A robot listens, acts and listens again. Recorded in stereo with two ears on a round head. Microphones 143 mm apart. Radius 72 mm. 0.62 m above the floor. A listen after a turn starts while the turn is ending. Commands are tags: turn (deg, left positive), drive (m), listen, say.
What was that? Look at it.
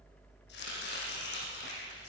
<turn deg="90"/>
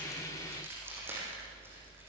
<turn deg="-15"/>
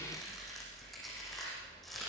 <say>Facing the chopping.</say>